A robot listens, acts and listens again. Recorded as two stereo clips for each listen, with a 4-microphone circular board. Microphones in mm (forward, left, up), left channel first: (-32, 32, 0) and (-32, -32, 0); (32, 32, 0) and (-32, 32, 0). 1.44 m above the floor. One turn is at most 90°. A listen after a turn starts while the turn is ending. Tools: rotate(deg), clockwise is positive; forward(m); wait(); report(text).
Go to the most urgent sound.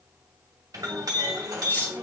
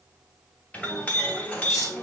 wait()
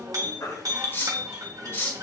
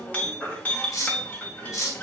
rotate(-70)
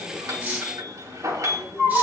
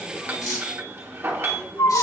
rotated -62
rotate(-10)
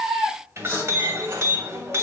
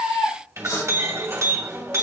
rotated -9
forward(1.0)
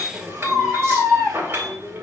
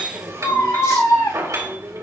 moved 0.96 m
forward(1.0)
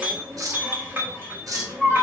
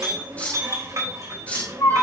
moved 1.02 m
forward(1.0)
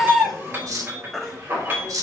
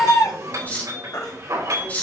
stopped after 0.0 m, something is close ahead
report("Arrived at the baby crying, straight ahead.")